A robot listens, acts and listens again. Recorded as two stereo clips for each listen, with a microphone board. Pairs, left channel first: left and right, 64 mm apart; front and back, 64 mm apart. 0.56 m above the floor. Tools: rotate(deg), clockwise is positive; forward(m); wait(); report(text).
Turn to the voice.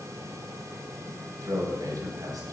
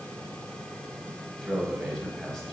rotate(85)
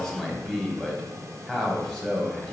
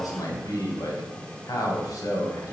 report("Found it: a man speaking, straight ahead, 1 to 2 m away.")